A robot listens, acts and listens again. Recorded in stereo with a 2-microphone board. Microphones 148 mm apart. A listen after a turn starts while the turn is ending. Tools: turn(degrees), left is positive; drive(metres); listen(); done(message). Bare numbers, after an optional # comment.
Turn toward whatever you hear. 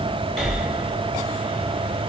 turn(-30)
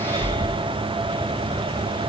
# So it is at 150° right.
turn(-150)
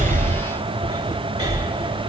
# The breathing is now 25° right.
turn(-25)
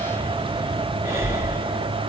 # The breathing is now 20° right.
turn(-20)
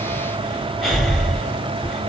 done("Found it: breathing, straight ahead, 2 to 4 m away.")